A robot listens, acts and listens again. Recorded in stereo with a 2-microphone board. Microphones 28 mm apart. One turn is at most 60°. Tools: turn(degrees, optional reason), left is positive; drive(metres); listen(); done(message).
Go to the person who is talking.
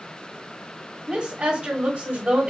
turn(degrees=-30, reason="The woman speaking: about 30° right or 150° right.")
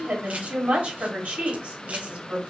turn(degrees=-60, reason="So it is at 115° right.")
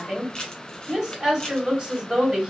turn(degrees=-35, reason="The woman speaking is now 35° right.")
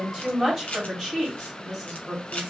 turn(degrees=-15, reason="The woman speaking is now 15° right.")
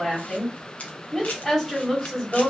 drive(metres=1.0)
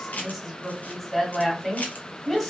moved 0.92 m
drive(metres=1.0)
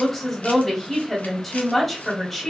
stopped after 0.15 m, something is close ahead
done("I am next to the woman speaking.")